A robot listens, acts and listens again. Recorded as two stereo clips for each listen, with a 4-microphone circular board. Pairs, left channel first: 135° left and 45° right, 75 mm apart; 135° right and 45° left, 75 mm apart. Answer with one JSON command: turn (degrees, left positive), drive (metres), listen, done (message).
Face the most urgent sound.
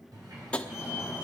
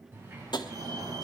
{"turn": 35}
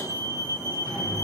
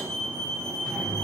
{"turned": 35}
{"done": "Facing the fire alarm."}